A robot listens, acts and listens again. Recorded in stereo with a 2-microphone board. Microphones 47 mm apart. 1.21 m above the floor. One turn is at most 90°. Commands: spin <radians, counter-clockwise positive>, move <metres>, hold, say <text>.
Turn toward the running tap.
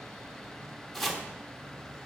hold
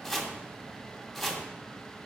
hold
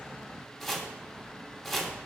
say I can't make out a running tap, only chopping.